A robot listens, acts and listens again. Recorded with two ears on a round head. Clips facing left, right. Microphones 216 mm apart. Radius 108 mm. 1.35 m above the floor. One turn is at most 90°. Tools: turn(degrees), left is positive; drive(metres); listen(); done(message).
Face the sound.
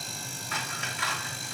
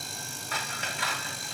turn(degrees=-30)
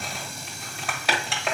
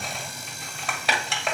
done("Found it: scissors, straight ahead, 1 to 2 m away.")